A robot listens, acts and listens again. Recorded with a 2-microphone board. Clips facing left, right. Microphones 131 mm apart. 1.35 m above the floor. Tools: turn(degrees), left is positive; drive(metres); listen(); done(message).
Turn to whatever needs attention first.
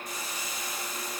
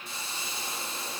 listen()
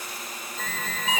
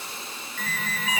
turn(degrees=20)
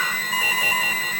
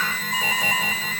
done("Facing the alarm, over 4 m away.")